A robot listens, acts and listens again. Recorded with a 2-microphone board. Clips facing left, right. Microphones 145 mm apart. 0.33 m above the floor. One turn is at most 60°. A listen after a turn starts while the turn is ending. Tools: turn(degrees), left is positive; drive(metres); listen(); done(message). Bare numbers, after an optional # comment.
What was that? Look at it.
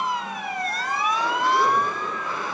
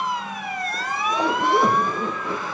# The zipper: about 65° right or 115° right.
turn(-60)
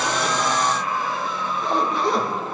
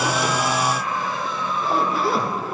done("Facing the zipper, over 4 m away.")